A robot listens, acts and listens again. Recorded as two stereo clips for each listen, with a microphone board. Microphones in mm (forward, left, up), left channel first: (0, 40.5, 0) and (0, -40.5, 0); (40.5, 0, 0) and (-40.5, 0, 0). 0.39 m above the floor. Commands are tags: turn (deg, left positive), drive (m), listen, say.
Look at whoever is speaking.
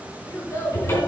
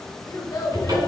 <turn deg="40"/>
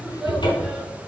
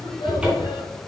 <say>Facing the child speaking, 2 to 4 m away.</say>